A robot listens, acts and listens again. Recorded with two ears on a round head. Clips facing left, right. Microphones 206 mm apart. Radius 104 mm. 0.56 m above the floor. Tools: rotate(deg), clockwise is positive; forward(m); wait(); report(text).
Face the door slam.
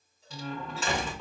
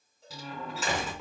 rotate(30)
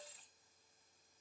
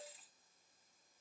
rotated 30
wait()
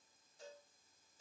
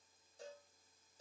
report("I heard a door slam, but can't make it out now. It was about 25° left or 145° right.")